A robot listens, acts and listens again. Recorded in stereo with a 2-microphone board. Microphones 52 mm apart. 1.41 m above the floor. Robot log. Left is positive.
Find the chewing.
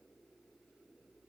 cmd idle
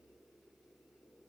cmd idle
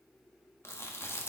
note: The chewing: about 60° left or 120° left.
cmd yaw +60
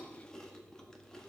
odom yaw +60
note: So it is at 15° left.
cmd yaw +15
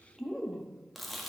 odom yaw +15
end: Facing the chewing.